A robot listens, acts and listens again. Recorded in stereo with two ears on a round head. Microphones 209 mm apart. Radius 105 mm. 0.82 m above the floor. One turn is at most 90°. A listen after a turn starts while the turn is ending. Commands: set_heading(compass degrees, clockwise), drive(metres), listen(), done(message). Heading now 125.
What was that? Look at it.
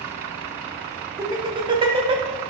set_heading(150)
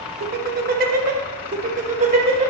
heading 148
set_heading(173)
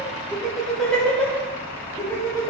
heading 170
set_heading(155)
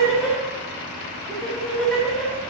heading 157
done("Found it: laughter, straight ahead, 2 to 4 m away.")